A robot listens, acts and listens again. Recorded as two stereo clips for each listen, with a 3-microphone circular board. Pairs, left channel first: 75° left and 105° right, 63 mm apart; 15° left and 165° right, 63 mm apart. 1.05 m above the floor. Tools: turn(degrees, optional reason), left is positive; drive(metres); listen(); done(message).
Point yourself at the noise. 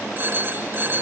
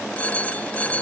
turn(degrees=-50, reason="The phone ringing: 50° right.")
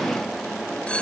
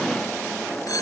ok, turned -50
done("Found it: a phone ringing, straight ahead.")